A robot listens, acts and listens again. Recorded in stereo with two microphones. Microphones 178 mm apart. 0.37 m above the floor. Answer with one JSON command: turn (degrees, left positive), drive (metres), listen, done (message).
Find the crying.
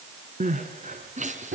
{"turn": -45}
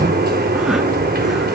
{"listen": true}
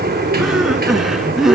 {"done": "Facing the crying, 2 to 4 m away."}